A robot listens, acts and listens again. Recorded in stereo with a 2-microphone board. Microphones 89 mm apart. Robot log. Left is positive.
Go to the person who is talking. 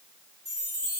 cmd idle
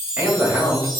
note: The man speaking: about 20° right or 160° right.
cmd yaw -20
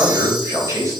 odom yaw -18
note: So it is at 145° right.
cmd yaw -145
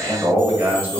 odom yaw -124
note: The man speaking is now 20° right.
cmd yaw -20
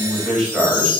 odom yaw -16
cmd fwd 1.0
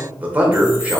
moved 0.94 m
note: The man speaking is now 15° right.
cmd yaw -15
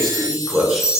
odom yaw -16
cmd fwd 1.0
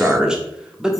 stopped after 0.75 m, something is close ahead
note: The man speaking is now 10° right.
cmd yaw -10
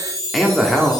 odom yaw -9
end: I am next to the man speaking.